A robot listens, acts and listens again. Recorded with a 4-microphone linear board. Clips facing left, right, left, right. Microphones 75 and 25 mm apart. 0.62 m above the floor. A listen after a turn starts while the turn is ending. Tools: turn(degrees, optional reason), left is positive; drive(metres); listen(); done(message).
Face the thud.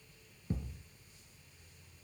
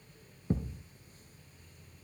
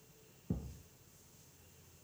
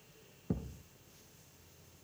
turn(degrees=-35, reason="The thud: about 35° right or 145° right.")
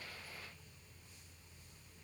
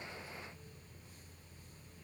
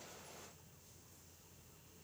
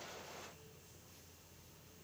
listen()
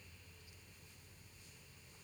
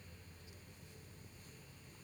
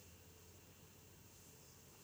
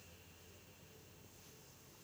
done("I heard a thud, but can't make it out now. It was about straight ahead or 110° right.")